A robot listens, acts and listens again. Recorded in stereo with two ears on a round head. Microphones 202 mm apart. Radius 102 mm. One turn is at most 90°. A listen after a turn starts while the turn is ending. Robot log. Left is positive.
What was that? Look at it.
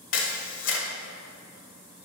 note: The camera shutter: about 60° left or 120° left.
cmd yaw +60
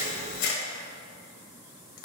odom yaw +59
note: So it is at 60° left.
cmd yaw +60
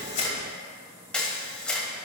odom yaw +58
end: Facing the camera shutter, 1 to 2 m away.